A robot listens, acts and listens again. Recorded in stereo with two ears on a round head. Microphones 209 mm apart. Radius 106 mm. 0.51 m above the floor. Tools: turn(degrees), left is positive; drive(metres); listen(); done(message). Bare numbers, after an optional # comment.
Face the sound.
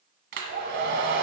# The hair dryer: about 50° right or 130° right.
turn(-50)
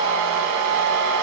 # So it is at 80° right.
turn(-80)
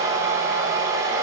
# The hair dryer is now 15° right.
turn(-15)
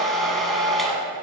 done("Facing the hair dryer.")